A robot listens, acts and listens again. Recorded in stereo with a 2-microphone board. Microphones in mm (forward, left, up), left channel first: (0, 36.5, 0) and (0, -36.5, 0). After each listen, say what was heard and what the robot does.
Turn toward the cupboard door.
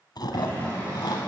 The cupboard door: about 50° right or 130° right. Turn 50° right.
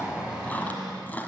So it is at 80° right. Turn 80° right.
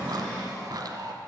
The cupboard door is now 10° left. Turn 10° left.
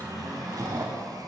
Found it: a cupboard door, straight ahead.